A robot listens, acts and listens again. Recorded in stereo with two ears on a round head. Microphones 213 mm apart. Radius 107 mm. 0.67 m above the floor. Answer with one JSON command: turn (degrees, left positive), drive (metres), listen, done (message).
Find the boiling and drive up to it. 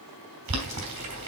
{"turn": -90}
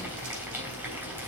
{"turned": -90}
{"turn": -10}
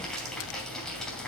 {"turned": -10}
{"drive": 1.0}
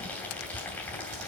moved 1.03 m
{"drive": 1.0}
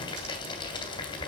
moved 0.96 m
{"turn": 20}
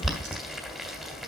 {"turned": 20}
{"drive": 1.0}
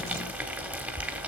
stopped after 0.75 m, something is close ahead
{"done": "Arrived at the boiling, straight ahead."}